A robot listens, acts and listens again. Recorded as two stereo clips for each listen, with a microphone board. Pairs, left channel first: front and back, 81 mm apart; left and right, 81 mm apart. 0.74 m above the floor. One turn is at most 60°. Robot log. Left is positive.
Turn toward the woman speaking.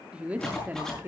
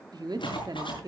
note: The woman speaking: 120° right.
cmd yaw -60
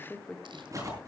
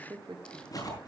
note: The woman speaking is now 80° right.
cmd yaw -60
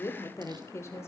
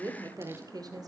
note: The woman speaking is now 55° right.
cmd yaw -55
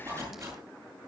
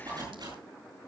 cmd idle
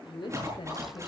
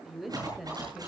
end: Found it: a woman speaking, straight ahead.